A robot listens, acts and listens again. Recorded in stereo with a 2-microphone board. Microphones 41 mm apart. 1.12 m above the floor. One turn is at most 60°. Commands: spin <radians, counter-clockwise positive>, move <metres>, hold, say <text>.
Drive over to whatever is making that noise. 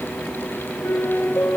spin 1.05
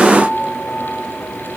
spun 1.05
spin 0.52
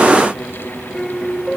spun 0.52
move 1.0
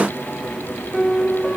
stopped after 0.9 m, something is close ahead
say Blocked. The piano is further on, straight ahead.